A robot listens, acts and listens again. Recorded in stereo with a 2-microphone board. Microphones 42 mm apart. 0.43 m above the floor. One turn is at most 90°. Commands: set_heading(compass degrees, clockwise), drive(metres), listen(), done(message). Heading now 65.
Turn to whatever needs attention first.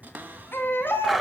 set_heading(10)
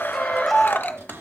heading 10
done("Facing the baby crying, 2 to 4 m away.")